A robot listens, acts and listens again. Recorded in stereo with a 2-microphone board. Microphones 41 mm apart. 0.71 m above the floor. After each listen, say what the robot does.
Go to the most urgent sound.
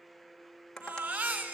Turn 55° right.
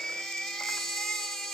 Drive 1.0 m forward.
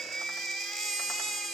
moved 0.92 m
Drive 1.0 m forward.
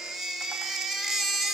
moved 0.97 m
Drive 1.0 m forward.
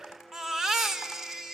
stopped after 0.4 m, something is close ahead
Turn 10° right.
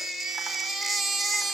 Arrived at the baby crying, straight ahead.